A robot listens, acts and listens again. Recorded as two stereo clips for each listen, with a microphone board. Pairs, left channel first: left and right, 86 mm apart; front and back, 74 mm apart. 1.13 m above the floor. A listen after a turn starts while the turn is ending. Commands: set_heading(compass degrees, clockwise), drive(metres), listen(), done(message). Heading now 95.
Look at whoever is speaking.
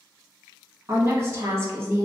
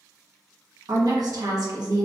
set_heading(240)
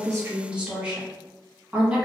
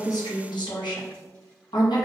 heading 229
set_heading(239)
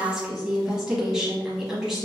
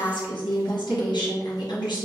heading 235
done("Found it: a woman speaking, straight ahead, 1 to 2 m away.")